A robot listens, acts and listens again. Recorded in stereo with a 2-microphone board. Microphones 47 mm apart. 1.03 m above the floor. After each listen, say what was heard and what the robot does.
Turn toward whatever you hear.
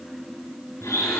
Turn 90° left.
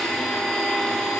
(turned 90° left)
So it is at 10° left. Turn 10° left.
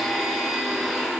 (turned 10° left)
Found it: a blender, straight ahead, over 4 m away.